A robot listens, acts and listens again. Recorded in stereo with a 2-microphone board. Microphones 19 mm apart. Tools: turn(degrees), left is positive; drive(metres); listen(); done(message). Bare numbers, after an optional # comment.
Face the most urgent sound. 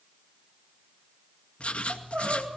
turn(-90)
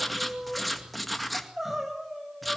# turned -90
# So it is at 15° right.
turn(-15)
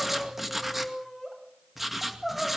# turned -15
done("Found it: crying, straight ahead.")